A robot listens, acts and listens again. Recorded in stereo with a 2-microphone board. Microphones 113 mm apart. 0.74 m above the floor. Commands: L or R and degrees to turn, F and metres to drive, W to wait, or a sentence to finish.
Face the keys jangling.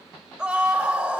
W
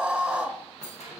L70
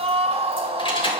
W
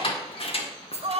L65
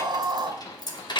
L45
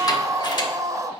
W
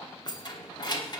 L40
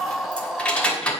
L10
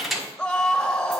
Found it: keys jangling, straight ahead, 1 to 2 m away.